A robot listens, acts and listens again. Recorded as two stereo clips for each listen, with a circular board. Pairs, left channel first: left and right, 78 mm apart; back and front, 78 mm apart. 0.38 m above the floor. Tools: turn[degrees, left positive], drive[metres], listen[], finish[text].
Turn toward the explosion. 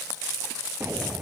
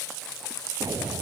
Thought: The explosion: 35° right.
Action: turn[-35]
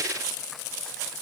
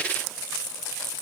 Action: finish[I heard an explosion from this way, but can't make it out now.]